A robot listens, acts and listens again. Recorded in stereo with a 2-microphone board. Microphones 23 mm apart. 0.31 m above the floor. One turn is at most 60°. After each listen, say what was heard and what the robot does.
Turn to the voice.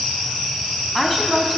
Turn 30° left.
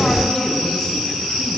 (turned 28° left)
So it is at 150° left. Turn 60° left.
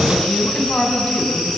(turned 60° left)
The woman speaking is now 90° left. Turn 60° left.
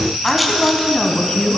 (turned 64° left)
The woman speaking is now 25° left. Turn 25° left.
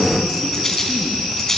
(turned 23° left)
Keep listening.
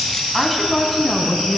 Found it: a woman speaking, straight ahead, 1 to 2 m away.